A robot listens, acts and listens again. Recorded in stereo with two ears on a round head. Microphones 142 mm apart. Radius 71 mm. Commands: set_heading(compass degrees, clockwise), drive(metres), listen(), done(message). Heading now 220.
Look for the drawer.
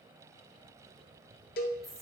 listen()
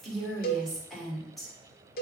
listen()
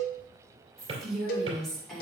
set_heading(255)
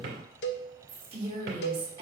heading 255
set_heading(0)
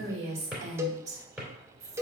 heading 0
done("Found it: a drawer, straight ahead.")